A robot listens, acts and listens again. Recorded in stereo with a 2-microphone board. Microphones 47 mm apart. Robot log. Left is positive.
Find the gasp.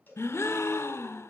note: The gasp: about 70° left or 110° left.
cmd yaw +70
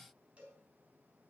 cmd idle
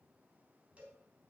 end: I heard a gasp, but can't make it out now. It was about straight ahead or 40° left.